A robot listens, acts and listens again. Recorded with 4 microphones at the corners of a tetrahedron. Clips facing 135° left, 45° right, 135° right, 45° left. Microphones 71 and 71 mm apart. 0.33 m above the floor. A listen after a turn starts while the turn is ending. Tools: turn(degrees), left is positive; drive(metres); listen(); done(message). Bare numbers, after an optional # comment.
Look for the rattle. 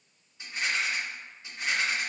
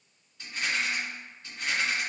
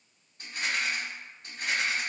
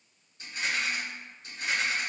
# The rattle: 155° right.
turn(-155)
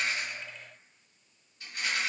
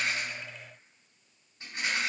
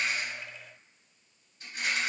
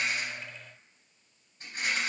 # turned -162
# The rattle is now 10° left.
turn(10)
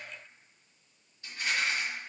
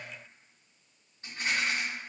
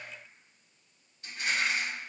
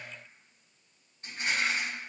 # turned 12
done("Facing the rattle.")